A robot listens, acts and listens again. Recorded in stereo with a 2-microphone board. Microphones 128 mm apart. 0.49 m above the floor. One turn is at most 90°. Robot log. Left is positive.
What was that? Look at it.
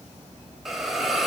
cmd yaw +30
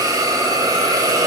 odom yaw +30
note: So it is at 30° right.
cmd yaw -30
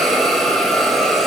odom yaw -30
end: Facing the hiss.